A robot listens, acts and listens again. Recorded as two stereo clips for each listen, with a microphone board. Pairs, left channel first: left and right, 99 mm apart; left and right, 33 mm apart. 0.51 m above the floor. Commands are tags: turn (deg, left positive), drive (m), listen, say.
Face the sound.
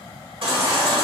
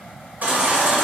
<turn deg="-70"/>
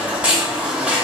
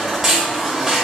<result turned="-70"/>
<turn deg="-15"/>
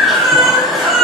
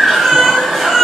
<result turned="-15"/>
<say>Found it: a baby crying, straight ahead, 1 to 2 m away.</say>